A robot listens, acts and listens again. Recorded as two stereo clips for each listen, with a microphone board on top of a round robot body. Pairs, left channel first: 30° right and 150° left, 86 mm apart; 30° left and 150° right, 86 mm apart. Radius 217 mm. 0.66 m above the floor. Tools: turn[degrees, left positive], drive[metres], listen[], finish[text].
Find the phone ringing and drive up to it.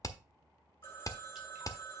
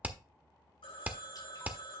Thought: The phone ringing: 30° left.
Action: turn[30]
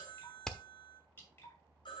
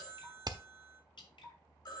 Action: drive[1.0]
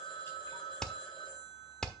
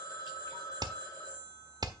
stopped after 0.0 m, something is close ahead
Action: finish[Something is in my way. I am facing the phone ringing but have not reached it.]